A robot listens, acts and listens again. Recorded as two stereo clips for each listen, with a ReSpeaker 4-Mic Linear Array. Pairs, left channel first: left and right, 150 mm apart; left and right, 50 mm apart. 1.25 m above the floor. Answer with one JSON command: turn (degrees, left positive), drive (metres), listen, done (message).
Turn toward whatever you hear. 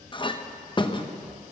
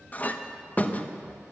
{"turn": 35}
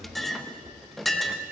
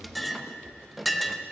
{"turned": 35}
{"done": "Found it: a clink, straight ahead."}